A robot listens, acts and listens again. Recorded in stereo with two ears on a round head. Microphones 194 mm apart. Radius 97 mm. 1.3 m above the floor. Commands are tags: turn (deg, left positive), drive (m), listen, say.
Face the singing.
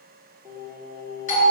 <turn deg="-30"/>
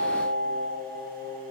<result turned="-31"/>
<turn deg="20"/>
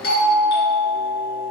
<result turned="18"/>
<listen/>
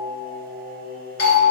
<say>Facing the singing.</say>